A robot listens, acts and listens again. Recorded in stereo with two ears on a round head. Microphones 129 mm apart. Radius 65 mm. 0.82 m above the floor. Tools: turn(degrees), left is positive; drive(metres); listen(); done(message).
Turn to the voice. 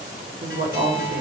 turn(degrees=-65)
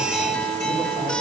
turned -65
listen()
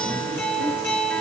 listen()
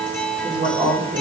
turn(degrees=-40)
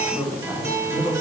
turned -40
turn(degrees=-10)
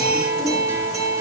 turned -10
listen()
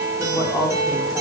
done("Found it: a woman speaking, straight ahead, 2 to 4 m away.")